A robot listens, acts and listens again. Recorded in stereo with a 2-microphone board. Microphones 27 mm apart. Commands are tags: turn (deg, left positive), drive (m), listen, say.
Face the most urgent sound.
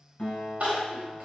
<turn deg="-60"/>
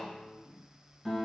<listen/>
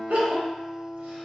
<turn deg="-55"/>
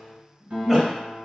<say>Facing the crying.</say>